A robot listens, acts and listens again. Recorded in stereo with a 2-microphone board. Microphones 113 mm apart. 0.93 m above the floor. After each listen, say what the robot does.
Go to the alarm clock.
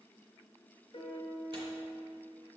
Keep listening.
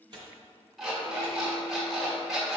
Turn 30° left.
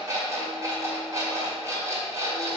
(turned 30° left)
Turn 30° right.
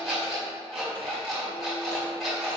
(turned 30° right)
Drive 1.0 m forward.
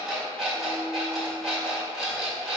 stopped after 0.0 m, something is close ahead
Something is in my way. I am facing the alarm clock but have not reached it.